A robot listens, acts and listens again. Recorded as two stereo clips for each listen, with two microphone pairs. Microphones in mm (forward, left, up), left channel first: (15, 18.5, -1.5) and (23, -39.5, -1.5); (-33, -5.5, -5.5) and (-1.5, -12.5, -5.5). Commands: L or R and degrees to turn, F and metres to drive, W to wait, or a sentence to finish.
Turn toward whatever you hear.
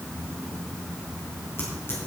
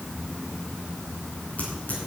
L145
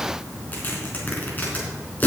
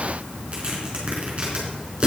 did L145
L40
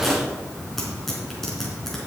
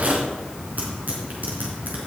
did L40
L10
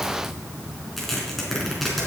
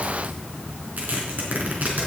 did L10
L10
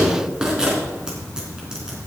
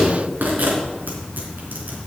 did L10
Found it: tearing paper, straight ahead.